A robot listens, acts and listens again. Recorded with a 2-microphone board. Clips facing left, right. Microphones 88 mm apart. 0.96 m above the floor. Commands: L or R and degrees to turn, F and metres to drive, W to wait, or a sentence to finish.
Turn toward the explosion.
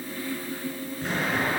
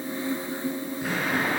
R30
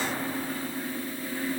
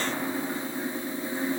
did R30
W
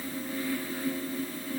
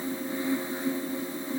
I heard an explosion, but can't make it out now. It was about 20° left or 140° right.